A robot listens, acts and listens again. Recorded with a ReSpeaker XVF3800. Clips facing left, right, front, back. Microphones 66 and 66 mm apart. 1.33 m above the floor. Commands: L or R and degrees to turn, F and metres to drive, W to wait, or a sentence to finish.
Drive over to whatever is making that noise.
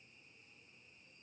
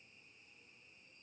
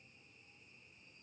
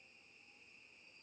W
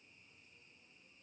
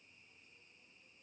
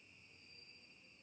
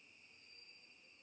W
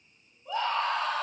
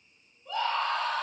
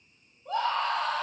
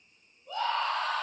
F1.0
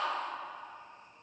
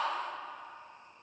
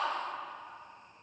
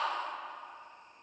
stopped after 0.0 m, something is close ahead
Blocked. The scream is further on, straight ahead.